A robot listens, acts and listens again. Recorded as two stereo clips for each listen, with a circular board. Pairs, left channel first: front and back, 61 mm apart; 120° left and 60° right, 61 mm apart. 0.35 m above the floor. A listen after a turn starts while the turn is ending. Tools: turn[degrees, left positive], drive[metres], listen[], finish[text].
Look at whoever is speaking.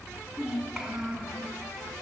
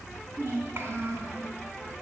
Thought: The child speaking: 100° right.
Action: turn[-100]
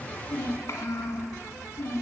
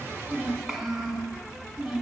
Thought: The child speaking is now 20° left.
Action: turn[20]
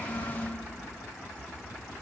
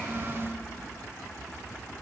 Action: finish[Found it: a child speaking, straight ahead.]